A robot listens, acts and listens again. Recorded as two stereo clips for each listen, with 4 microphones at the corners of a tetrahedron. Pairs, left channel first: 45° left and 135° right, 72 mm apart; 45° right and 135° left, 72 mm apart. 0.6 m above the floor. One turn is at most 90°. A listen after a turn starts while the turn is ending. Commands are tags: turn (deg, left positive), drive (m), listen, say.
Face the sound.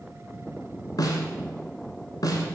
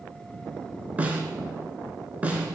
<turn deg="65"/>
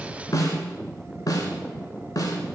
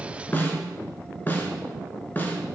<turn deg="15"/>
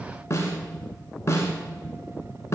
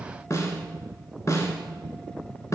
<say>Facing the snare drum, 1 to 2 m away.</say>